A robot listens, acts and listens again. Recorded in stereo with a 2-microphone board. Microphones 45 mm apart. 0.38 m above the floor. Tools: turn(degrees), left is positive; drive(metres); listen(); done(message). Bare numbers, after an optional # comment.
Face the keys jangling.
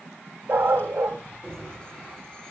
# The keys jangling: about 25° left or 155° left.
turn(25)
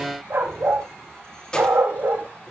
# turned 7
# The keys jangling: about 20° left or 160° left.
turn(20)
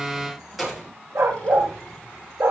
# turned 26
done("Found it: keys jangling, straight ahead, over 4 m away.")